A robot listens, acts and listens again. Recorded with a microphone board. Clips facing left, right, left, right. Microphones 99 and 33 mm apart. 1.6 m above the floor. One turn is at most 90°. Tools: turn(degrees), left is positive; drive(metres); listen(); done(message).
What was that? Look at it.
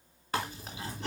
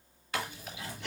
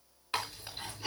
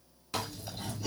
turn(degrees=40)
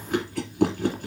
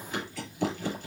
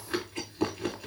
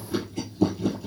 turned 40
turn(degrees=90)
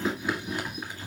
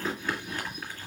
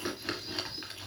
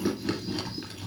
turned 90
turn(degrees=15)
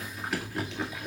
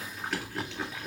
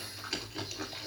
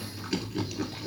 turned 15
done("Facing the chewing.")